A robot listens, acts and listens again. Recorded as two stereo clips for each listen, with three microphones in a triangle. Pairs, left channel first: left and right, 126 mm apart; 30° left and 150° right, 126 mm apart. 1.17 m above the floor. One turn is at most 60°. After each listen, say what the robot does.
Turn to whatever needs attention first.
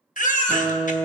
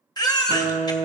Turn 60° left.
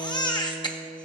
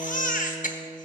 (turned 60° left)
Turn 35° left.
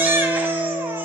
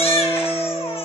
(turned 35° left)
Turn 15° right.
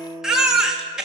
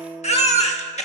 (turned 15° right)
Found it: a baby crying, straight ahead, 1 to 2 m away.